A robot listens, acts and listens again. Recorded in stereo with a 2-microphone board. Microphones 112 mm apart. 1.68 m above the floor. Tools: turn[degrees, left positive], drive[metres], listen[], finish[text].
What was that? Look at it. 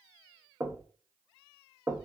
Thought: The knocking: about 25° right or 155° right.
Action: turn[-25]
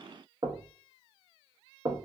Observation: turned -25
Thought: So it is at 130° right.
Action: turn[-130]
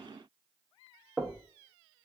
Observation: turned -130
Thought: The knocking is now 10° right.
Action: turn[-10]
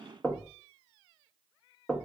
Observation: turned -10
Action: finish[Found it: knocking, straight ahead.]